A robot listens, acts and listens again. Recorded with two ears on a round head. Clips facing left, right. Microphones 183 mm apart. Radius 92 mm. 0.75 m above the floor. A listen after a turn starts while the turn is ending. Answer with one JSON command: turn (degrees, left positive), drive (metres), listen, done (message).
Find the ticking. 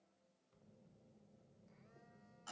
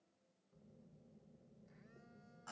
{"listen": true}
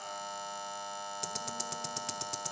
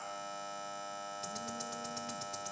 {"turn": 65}
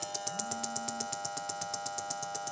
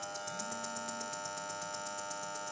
{"turn": 50}
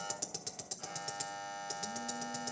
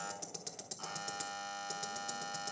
{"done": "Facing the ticking."}